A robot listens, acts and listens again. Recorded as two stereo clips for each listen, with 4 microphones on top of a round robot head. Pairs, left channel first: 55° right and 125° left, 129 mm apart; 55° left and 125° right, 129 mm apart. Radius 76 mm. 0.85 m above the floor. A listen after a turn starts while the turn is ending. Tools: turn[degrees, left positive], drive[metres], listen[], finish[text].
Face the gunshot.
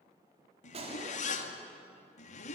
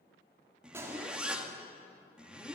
Thought: The gunshot: 165° left.
Action: turn[165]
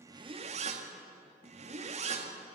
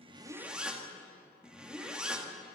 Action: finish[Facing where the gunshot came from. I can't hear it now.]